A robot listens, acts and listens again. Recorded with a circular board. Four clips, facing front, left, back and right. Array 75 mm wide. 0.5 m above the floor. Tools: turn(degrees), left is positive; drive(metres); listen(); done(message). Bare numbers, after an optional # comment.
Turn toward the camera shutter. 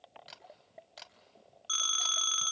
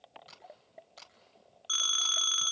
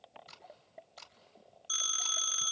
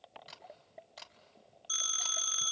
# The camera shutter: 10° right.
turn(-10)
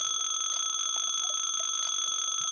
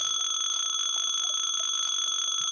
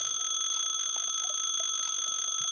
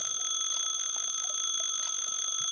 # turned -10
listen()
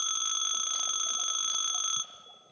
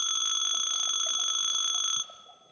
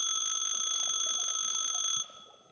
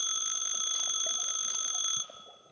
listen()
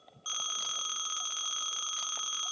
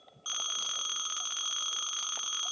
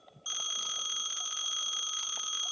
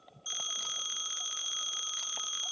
done("I heard a camera shutter from this way, but can't make it out now.")